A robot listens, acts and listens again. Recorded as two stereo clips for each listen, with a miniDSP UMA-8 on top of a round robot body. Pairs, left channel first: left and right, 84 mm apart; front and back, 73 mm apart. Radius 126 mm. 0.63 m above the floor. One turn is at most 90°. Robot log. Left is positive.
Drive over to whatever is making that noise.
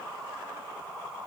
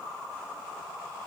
cmd idle
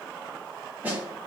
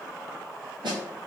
note: The snare drum: 165° right.
cmd yaw -90
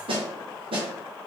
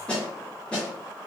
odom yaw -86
note: The snare drum is now 80° right.
cmd yaw -80
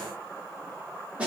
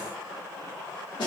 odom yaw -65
note: The snare drum is now 15° right.
cmd yaw -15
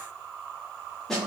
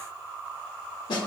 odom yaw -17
cmd fwd 1.0
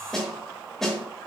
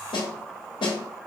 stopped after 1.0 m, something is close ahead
end: Arrived at the snare drum, straight ahead.